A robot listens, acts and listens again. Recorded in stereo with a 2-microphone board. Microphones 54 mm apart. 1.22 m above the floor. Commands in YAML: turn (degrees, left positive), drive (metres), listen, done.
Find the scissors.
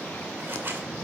turn: -50
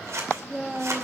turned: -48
turn: -80
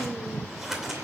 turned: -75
done: "Facing the scissors."